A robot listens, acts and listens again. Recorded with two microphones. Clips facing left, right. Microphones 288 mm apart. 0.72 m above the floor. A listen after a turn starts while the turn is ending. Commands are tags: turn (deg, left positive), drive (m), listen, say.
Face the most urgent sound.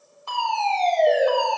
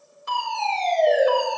<turn deg="-20"/>
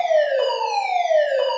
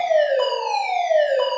<say>Found it: a fire alarm, straight ahead, 2 to 4 m away.</say>